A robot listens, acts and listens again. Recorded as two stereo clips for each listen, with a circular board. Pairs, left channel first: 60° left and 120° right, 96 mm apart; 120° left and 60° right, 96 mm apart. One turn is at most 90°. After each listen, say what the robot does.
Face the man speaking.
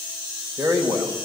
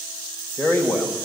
Turn 90° left.
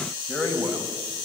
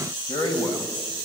Turn 90° left.
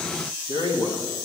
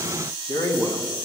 Turn 65° left.
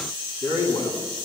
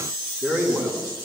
Facing the man speaking.